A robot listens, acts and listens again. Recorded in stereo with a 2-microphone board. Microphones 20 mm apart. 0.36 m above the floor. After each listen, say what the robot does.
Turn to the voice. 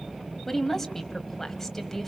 Turn 30° left.
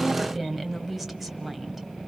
Turn 15° right.
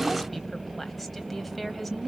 Facing the woman speaking.